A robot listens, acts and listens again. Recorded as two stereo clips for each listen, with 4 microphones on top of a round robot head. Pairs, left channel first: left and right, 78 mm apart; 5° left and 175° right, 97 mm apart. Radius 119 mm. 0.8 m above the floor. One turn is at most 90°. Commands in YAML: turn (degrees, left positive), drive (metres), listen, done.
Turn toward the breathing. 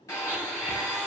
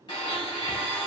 listen: true
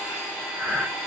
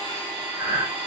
turn: 90
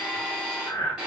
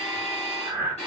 turn: 90
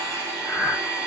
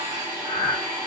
turn: 20
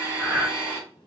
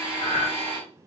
done: "Found it: breathing, straight ahead."